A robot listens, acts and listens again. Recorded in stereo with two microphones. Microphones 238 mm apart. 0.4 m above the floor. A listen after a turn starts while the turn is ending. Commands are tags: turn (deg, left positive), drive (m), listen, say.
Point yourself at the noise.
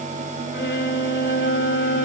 <turn deg="45"/>
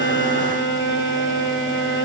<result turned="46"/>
<turn deg="80"/>
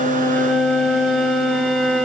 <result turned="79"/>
<say>Found it: a violin, straight ahead, 1 to 2 m away.</say>